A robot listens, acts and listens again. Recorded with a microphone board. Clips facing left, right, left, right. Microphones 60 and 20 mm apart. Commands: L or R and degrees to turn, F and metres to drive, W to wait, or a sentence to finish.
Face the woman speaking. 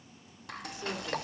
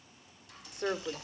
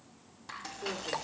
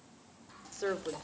R55
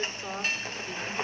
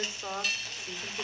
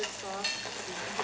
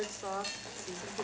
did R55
R10
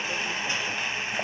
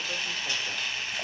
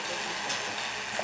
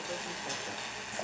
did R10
W
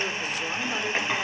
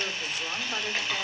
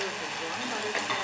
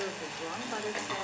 W
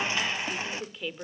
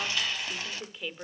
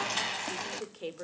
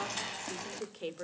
Facing the woman speaking, 1 to 2 m away.